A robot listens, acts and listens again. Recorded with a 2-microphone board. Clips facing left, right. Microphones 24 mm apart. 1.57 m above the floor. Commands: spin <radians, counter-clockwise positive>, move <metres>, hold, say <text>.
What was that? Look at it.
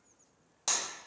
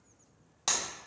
spin -0.44
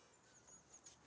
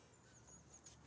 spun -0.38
hold
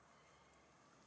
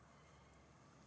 say I heard breaking glass, but can't make it out now. It was about straight ahead or 135° right.